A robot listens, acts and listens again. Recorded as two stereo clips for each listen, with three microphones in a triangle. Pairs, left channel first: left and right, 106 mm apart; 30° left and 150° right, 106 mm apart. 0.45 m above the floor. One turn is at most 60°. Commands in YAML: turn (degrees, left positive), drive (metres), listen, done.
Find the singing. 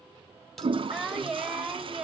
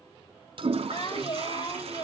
done: "Found it: singing, straight ahead, 1 to 2 m away."